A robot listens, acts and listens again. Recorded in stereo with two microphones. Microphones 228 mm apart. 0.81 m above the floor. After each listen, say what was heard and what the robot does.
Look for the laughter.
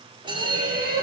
Turn 90° right.
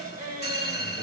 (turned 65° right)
So it is at 35° right. Turn 35° right.
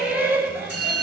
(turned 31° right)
Found it: laughter, straight ahead, over 4 m away.